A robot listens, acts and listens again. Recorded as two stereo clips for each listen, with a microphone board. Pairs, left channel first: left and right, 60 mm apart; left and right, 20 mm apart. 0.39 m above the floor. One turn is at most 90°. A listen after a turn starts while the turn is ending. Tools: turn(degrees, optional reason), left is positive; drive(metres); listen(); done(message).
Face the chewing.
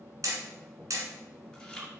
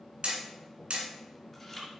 turn(degrees=30)
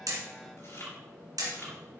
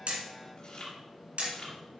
turn(degrees=90, reason="So it is at 135° left.")
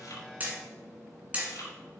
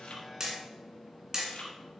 turn(degrees=80, reason="The chewing is now 80° left.")
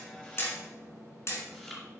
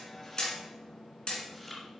done("Facing the chewing.")